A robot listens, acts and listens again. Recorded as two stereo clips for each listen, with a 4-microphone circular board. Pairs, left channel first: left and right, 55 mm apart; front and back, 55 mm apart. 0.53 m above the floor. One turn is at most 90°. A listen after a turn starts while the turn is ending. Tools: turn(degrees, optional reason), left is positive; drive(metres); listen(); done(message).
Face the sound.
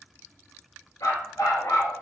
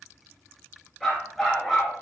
turn(degrees=85, reason="The dog barking: 85° left.")
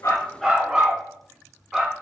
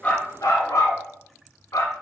done("Found it: a dog barking, straight ahead, 1 to 2 m away.")